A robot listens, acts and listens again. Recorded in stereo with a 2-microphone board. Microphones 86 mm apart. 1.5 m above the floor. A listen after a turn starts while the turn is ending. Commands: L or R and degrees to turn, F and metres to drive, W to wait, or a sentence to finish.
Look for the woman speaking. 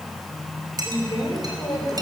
L60
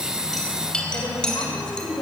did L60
L55
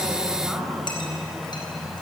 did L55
W
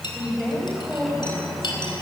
Facing the woman speaking, over 4 m away.